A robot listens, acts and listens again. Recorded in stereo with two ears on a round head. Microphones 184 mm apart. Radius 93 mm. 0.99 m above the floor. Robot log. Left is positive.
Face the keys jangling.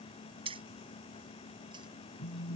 note: The keys jangling: about 30° right or 150° right.
cmd yaw -30
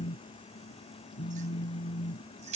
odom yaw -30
note: The keys jangling: about 40° right or 140° right.
cmd yaw -40
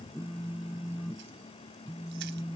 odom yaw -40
cmd idle
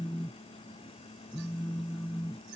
cmd idle
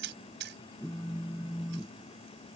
note: So it is at 115° right.
cmd yaw -115
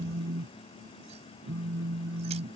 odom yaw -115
cmd idle
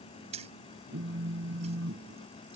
note: The keys jangling is now 35° right.
cmd yaw -35
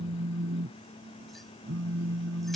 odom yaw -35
cmd idle
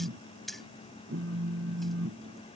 end: Facing the keys jangling.